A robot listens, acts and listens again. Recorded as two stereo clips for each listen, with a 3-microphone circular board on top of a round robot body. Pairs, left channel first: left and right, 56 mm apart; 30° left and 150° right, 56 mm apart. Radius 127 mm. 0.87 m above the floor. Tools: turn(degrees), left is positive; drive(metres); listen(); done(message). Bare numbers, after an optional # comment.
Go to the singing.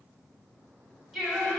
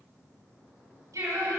# The singing: 175° right.
turn(-175)
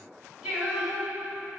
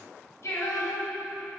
# The singing is now 15° right.
turn(-15)
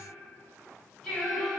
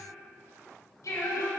drive(1.0)
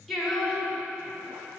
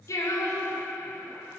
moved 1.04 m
drive(1.0)
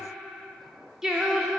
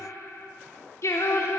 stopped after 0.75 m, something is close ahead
done("Arrived at the singing, straight ahead.")